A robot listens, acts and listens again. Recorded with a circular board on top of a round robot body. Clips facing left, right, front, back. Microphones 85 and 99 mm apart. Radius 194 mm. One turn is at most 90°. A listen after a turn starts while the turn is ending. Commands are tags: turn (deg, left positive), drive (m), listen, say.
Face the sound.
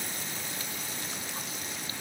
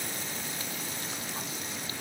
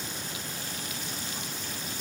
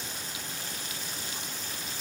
<listen/>
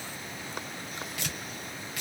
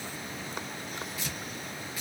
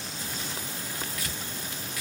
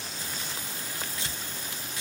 <turn deg="90"/>
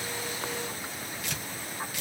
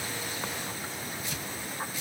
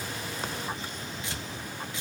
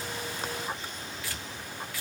<turn deg="70"/>
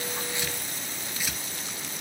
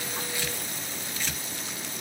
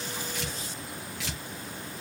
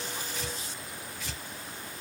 <turn deg="10"/>
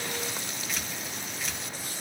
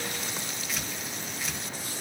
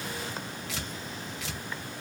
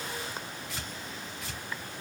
<say>Facing the tearing paper, 1 to 2 m away.</say>